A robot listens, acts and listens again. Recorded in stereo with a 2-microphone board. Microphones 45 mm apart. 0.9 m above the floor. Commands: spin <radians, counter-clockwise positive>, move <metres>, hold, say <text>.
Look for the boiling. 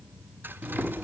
spin -0.52
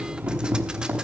spin -2.62
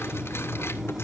spin -0.17
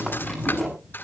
say Found it: boiling, straight ahead, over 4 m away.